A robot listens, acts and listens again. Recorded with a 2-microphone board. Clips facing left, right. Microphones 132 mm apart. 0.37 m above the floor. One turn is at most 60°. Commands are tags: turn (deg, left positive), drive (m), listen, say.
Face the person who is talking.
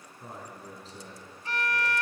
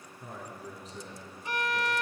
<turn deg="30"/>
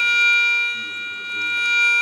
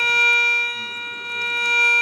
<listen/>
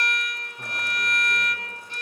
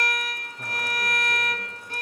<listen/>
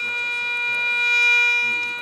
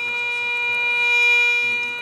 <say>I heard a man speaking, but can't make it out now. It was about straight ahead or 120° left.</say>